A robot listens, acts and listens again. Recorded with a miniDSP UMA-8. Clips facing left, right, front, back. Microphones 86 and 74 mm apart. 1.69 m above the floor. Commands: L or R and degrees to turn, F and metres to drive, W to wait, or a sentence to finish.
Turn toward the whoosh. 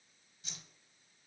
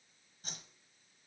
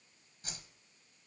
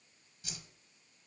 R45
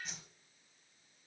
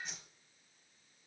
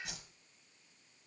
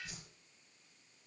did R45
Found it: a whoosh, straight ahead, 1 to 2 m away.